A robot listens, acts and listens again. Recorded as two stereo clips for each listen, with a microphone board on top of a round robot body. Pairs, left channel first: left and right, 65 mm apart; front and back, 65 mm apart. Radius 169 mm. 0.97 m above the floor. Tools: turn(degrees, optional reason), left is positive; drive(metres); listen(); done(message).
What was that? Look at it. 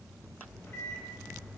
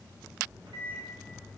turn(degrees=150, reason="The microwave: 150° left.")
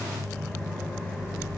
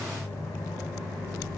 turn(degrees=15, reason="The microwave is now 15° left.")
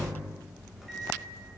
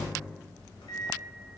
done("Found it: a microwave, straight ahead.")